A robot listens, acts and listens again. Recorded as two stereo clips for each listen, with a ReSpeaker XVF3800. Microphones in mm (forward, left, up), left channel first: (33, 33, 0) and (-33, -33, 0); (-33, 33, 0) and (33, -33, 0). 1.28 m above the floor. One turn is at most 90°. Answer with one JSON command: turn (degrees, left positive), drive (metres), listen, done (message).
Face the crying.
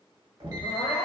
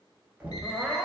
{"turn": 40}
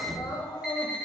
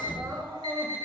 {"done": "Facing the crying."}